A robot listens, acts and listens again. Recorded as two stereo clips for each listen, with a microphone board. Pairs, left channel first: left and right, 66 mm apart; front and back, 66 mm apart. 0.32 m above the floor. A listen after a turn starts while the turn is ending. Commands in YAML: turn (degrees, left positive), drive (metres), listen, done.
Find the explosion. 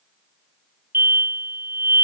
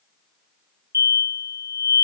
turn: -145
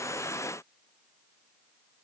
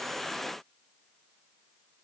done: "Facing where the explosion came from. I can't hear it now."